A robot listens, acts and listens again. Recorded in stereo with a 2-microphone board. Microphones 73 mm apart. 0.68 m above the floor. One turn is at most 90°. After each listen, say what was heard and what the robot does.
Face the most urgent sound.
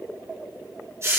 Keep listening.
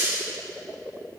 Keep listening.
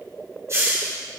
I can't make out anything urgent to turn to.